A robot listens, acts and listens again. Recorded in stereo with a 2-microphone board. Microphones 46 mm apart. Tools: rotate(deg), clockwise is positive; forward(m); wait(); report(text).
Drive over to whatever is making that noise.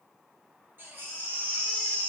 rotate(55)
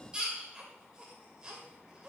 rotate(20)
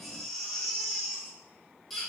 forward(1.0)
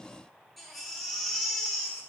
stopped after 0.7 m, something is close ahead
report("Arrived at the baby crying, straight ahead.")